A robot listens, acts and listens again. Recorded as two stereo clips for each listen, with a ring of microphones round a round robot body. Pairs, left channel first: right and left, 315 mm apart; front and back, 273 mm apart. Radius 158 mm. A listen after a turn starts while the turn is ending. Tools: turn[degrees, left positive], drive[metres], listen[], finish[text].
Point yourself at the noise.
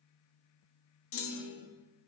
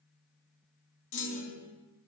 Thought: The clunk: 40° right.
Action: turn[-40]
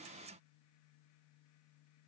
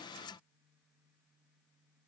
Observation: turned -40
Action: finish[Facing where the clunk came from. I can't hear it now.]